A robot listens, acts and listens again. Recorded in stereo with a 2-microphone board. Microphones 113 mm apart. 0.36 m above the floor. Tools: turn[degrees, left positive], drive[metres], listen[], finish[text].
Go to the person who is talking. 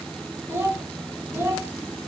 Thought: The child speaking: about 20° right or 160° right.
Action: turn[-20]
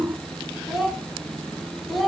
Action: drive[1.0]
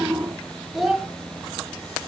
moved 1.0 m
Action: drive[1.0]
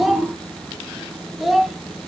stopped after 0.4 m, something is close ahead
Action: finish[I am next to the child speaking.]